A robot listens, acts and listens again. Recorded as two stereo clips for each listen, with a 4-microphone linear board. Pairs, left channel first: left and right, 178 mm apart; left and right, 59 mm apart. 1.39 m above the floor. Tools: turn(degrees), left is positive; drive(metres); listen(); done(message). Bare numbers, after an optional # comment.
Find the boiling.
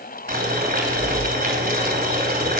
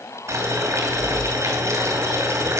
# The boiling: about 55° right or 125° right.
turn(-55)
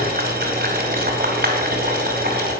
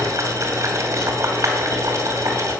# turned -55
# So it is at 65° right.
turn(-65)
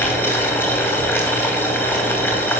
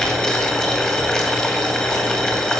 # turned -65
# The boiling is now 10° left.
turn(10)
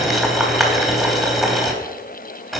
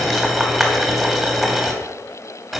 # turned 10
done("Found it: boiling, straight ahead, 2 to 4 m away.")